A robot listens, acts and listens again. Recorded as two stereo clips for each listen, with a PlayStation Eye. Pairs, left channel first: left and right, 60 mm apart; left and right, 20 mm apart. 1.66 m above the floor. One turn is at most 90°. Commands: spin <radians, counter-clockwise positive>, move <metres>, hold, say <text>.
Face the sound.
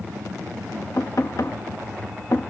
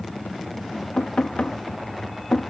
spin 1.22
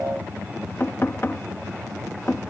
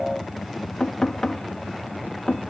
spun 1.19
spin 0.70
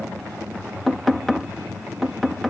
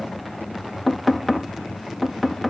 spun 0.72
say Facing the knocking.